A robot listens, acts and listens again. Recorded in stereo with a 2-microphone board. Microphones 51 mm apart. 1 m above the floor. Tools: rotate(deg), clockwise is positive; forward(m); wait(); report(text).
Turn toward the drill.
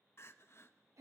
wait()
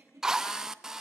rotate(30)
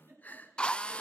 rotate(-20)
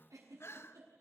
wait()
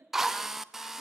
report("Found it: a drill, straight ahead.")